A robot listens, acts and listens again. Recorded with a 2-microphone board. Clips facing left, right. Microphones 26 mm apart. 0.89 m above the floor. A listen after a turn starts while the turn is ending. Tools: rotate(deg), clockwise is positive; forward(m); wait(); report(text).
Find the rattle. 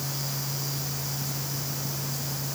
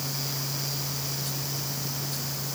wait()
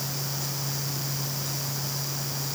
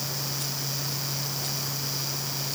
wait()
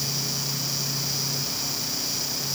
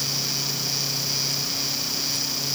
report("I can't make out a rattle.")